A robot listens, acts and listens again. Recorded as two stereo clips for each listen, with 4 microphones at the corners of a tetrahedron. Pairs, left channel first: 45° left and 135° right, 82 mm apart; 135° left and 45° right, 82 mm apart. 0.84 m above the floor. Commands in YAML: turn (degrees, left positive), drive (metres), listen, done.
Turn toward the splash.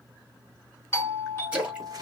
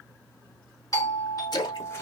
turn: 155
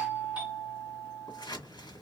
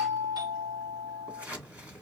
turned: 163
turn: -10
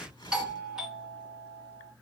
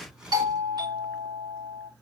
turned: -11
done: "I heard a splash from this way, but can't make it out now."